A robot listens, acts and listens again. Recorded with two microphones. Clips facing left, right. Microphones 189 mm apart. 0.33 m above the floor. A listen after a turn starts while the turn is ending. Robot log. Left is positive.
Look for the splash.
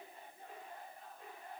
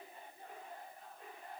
cmd idle
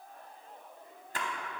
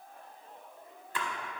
note: The splash: about 45° left or 135° left.
cmd yaw +45
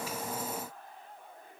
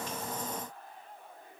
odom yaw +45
cmd idle
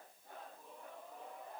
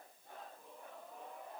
end: I heard a splash, but can't make it out now. It was about straight ahead or 90° left.